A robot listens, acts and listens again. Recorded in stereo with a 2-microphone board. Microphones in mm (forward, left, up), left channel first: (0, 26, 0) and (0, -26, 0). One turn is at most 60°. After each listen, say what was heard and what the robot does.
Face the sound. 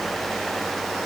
Keep listening.
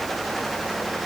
Keep listening.
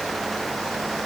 I can't make out anything to turn to.